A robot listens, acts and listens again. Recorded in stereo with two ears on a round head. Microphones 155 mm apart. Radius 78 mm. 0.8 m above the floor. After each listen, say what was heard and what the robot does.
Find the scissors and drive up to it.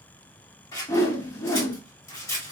The scissors: about 20° left or 160° left. Turn 20° left.
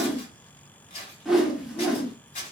So it is at 140° left. Turn 140° left.
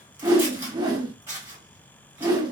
The scissors is now 15° right. Turn 15° right.
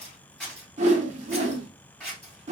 Drive 1.0 m forward.
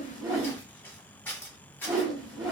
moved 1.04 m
The scissors is now 15° left. Turn 15° left.
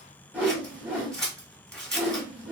Drive 1.0 m forward.
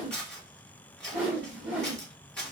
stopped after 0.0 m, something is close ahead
I am next to the scissors.